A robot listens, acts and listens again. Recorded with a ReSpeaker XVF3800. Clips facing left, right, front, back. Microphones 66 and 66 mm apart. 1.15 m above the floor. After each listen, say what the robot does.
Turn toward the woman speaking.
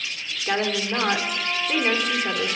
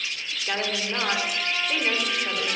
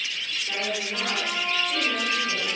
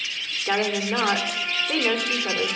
Turn 145° left.
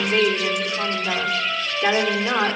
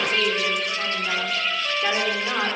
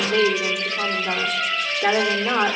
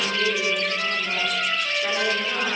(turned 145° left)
Turn 15° left.
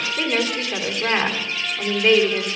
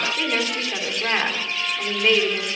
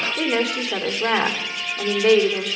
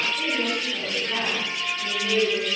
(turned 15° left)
Found it: a woman speaking, straight ahead, 2 to 4 m away.